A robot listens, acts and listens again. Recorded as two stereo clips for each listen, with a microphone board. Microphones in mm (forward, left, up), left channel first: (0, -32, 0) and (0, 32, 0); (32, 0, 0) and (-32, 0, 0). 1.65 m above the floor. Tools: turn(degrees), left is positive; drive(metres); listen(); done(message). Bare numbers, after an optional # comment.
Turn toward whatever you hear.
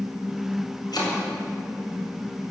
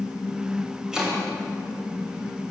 # The chopping: 100° right.
turn(-100)
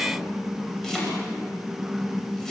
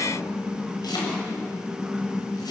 done("Found it: chopping, straight ahead.")